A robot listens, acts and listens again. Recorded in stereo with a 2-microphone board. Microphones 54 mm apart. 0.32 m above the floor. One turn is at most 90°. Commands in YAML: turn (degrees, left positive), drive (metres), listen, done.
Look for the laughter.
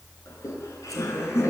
turn: 70
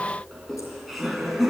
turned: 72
done: "Facing the laughter."